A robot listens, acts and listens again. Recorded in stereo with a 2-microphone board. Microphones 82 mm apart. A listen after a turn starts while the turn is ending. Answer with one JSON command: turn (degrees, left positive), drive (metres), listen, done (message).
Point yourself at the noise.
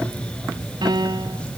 {"turn": -65}
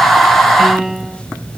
{"done": "Found it: a piano, straight ahead."}